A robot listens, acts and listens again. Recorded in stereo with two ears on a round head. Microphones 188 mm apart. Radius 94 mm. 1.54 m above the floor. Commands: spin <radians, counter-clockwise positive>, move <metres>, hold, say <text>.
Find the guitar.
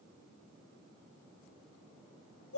hold
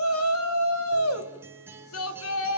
spin -0.52
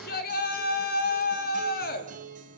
spin -2.36
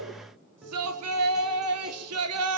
say Found it: a guitar, straight ahead, 2 to 4 m away.